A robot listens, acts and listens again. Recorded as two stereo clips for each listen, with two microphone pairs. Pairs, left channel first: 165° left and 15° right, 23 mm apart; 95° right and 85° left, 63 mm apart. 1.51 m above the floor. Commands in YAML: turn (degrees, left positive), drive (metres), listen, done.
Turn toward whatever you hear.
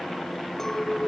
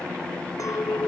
turn: -120
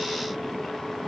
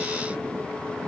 listen: true
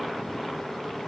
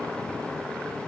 listen: true
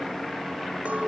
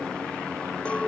turn: -25
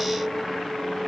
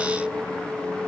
turn: -10
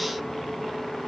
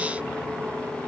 listen: true
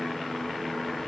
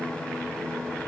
listen: true
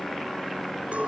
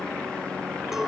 done: "Facing where the clink came from. I can't hear it now."